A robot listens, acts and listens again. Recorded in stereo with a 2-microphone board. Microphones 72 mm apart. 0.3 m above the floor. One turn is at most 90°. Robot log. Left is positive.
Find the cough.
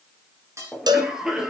cmd yaw -30
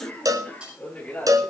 note: So it is at 20° left.
cmd yaw +20
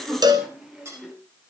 end: Found it: a cough, straight ahead.